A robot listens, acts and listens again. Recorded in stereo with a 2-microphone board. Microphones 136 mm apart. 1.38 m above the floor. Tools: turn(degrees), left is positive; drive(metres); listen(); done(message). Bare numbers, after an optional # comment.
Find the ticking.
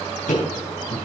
turn(90)
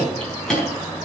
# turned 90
done("Found it: ticking, straight ahead, over 4 m away.")